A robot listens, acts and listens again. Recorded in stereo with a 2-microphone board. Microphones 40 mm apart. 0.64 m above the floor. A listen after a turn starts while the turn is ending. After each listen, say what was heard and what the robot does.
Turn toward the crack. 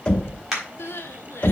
Turn 30° right.
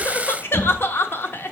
Keep listening.
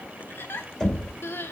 I heard a crack, but can't make it out now. It was about 25° left or 145° right.